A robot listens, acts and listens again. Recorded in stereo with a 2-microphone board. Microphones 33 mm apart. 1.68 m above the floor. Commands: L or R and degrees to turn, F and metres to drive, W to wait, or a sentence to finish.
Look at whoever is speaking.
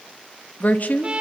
L50
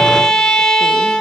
W
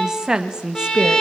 R25
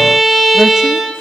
W
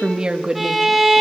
R25
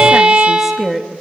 Found it: a woman speaking, straight ahead.